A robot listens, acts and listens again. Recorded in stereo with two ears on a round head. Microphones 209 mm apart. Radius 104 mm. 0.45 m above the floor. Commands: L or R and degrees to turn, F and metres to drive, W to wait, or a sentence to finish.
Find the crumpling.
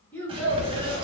R25
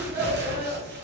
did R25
R130
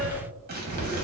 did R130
R45
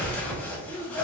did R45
Found it: crumpling, straight ahead, 1 to 2 m away.